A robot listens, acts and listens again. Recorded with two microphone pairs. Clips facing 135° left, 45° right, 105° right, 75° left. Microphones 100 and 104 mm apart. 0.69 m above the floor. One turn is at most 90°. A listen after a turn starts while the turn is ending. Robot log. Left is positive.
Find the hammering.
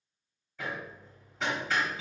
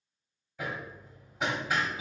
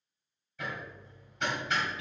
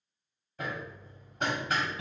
note: The hammering: 30° left.
cmd yaw +30
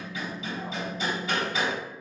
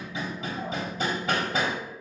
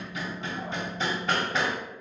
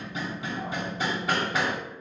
note: The hammering is now 10° right.
cmd yaw -10
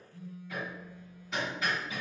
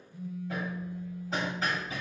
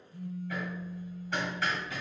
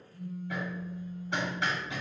end: Facing the hammering, 1 to 2 m away.